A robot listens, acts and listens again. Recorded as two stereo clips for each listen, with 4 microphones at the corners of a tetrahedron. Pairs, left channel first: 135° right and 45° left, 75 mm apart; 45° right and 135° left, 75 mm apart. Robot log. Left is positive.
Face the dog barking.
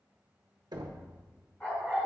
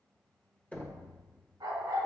note: The dog barking: 155° left.
cmd yaw +155
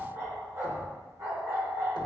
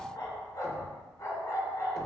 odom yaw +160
end: Found it: a dog barking, straight ahead.